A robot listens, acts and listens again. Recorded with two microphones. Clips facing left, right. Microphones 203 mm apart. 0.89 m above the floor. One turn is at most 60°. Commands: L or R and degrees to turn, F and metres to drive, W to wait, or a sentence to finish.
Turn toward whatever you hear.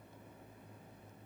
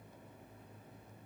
W
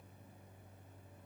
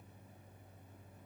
W
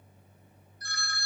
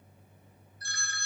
R25
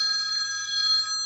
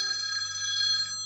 Facing the phone ringing, 1 to 2 m away.